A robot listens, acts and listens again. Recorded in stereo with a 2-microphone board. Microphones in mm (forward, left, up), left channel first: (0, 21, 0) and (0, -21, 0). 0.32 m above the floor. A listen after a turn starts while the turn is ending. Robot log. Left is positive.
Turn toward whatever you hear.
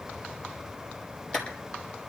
cmd yaw +30
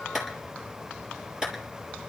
note: So it is at 20° right.
cmd yaw -20
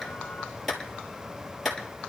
end: Found it: a clap, straight ahead.